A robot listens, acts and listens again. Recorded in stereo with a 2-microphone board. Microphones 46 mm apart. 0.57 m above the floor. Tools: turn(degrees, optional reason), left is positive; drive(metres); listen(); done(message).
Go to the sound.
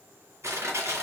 turn(degrees=-90)
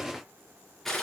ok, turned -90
turn(degrees=10, reason="So it is at 10° left.")
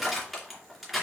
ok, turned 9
drive(metres=1.0)
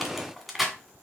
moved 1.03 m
drive(metres=1.0)
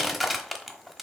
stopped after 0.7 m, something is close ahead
done("I am next to the crushing.")